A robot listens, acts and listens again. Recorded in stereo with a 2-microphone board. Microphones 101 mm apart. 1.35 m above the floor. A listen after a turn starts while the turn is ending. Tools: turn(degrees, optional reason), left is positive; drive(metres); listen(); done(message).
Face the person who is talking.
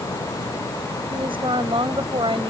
turn(degrees=-55, reason="The woman speaking: about 55° right or 125° right.")
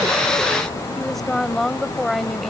done("Found it: a woman speaking, straight ahead.")